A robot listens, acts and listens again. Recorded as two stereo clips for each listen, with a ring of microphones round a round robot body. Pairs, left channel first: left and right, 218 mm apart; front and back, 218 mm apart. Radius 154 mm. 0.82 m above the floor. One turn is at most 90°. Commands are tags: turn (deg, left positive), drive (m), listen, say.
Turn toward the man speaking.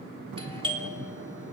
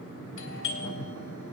<listen/>
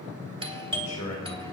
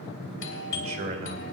<turn deg="90"/>
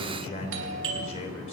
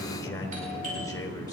<turn deg="75"/>
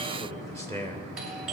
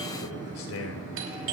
<turn deg="15"/>
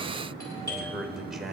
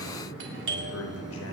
<say>Found it: a man speaking, straight ahead, 2 to 4 m away.</say>